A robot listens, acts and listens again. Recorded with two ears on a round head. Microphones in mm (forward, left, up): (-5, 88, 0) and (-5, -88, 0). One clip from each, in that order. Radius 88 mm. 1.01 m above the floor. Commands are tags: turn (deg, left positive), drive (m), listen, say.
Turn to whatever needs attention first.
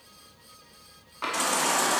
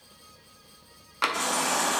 <turn deg="35"/>
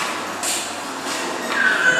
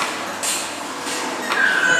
<say>Found it: a baby crying, straight ahead.</say>